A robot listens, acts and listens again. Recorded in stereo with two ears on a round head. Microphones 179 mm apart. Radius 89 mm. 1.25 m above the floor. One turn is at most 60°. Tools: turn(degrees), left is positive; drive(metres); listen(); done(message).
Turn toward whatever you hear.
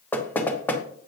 turn(degrees=30)
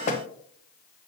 turn(degrees=60)
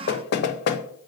turn(degrees=55)
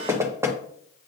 turn(degrees=-15)
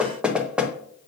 done("Facing the knocking.")